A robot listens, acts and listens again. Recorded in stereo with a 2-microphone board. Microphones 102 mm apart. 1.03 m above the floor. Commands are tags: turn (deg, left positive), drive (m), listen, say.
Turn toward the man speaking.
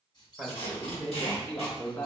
<turn deg="25"/>
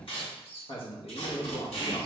<turn deg="110"/>
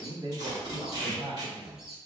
<turn deg="-60"/>
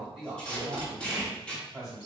<say>Facing the man speaking, 2 to 4 m away.</say>